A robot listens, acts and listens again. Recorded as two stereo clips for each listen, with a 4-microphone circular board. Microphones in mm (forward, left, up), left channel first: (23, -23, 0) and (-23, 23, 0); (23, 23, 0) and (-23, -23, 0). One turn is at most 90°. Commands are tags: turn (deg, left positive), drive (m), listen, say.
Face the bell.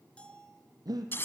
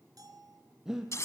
<turn deg="-90"/>
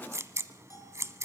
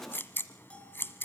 <turn deg="-25"/>
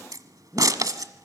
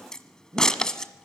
<listen/>
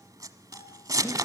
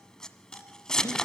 <say>I heard a bell from this way, but can't make it out now.</say>